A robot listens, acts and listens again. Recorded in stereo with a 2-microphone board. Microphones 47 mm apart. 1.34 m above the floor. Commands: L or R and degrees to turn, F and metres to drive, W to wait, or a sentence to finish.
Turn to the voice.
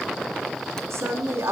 R90
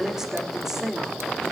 R10
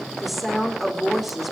Found it: a woman speaking, straight ahead.